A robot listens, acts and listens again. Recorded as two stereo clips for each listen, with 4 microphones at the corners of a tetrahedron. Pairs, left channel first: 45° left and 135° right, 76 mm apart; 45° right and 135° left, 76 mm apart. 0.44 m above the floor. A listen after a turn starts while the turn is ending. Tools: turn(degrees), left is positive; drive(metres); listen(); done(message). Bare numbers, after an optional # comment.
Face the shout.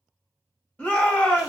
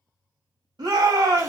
# The shout: 120° left.
turn(120)
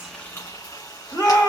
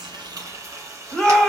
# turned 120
# The shout is now 30° left.
turn(30)
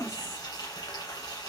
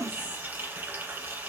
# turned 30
listen()
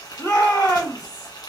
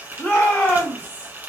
# The shout is now 15° left.
turn(15)
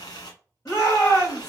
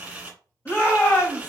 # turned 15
done("Found it: a shout, straight ahead.")